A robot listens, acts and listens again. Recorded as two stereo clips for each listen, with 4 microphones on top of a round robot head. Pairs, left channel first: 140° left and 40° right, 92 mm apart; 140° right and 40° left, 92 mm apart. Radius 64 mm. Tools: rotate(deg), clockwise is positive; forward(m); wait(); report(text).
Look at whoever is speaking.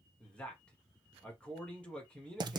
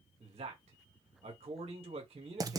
rotate(-60)
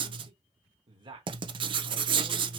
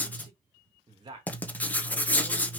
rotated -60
report("Found it: a man speaking, straight ahead.")